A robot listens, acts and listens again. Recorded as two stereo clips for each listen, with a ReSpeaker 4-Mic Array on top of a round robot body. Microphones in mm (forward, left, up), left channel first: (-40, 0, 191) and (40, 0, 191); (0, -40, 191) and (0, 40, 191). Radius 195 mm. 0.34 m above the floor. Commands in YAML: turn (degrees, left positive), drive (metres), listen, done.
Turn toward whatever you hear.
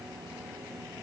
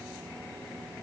listen: true
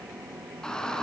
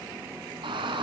turn: 100
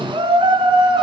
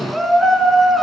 done: "Facing the shout, over 4 m away."